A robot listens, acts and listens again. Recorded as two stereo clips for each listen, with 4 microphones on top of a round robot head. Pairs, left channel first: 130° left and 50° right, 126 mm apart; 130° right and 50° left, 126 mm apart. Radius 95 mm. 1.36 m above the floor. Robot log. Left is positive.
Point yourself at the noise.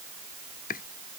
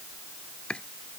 note: The chopping: 145° left.
cmd yaw +145
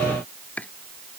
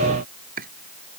note: The chopping is now 50° left.
cmd yaw +50
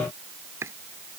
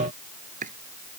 note: The chopping is now 25° left.
cmd yaw +25
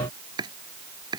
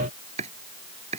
note: The chopping is now 10° left.
cmd yaw +10
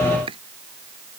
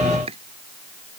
end: Found it: chopping, straight ahead.